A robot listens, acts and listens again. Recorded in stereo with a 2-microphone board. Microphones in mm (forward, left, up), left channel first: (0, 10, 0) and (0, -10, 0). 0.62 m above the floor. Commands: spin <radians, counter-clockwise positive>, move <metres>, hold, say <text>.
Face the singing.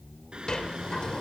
spin -1.05
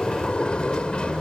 hold
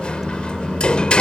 spin -0.87
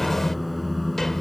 say Facing the singing.